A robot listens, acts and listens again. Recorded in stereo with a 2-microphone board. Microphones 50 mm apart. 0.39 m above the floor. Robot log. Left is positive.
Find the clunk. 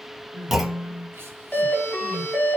cmd yaw -30
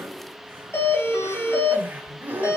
cmd idle
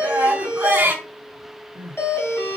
end: I heard a clunk, but can't make it out now. It was about 25° left or 145° right.